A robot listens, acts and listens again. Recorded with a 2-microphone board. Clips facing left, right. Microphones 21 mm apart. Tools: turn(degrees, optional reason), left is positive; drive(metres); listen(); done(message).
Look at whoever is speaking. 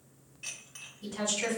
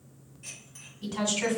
turn(degrees=-60, reason="The woman speaking: about 60° right or 120° right.")
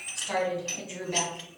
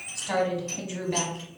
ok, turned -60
turn(degrees=-20, reason="So it is at 20° right.")
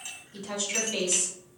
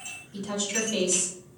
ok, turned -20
done("Found it: a woman speaking, straight ahead.")